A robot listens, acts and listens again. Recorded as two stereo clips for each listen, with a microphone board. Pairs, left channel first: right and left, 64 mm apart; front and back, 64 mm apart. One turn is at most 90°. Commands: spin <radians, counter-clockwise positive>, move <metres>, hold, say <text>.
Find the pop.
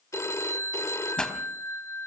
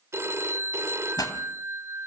spin -0.17
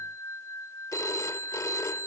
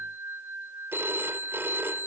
say Facing where the pop came from. I can't hear it now.